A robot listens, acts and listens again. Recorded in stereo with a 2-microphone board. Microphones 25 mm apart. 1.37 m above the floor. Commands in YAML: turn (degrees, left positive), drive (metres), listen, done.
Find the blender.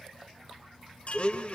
turn: 50
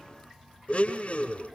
turn: 70
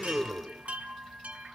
done: "Facing the blender, 2 to 4 m away."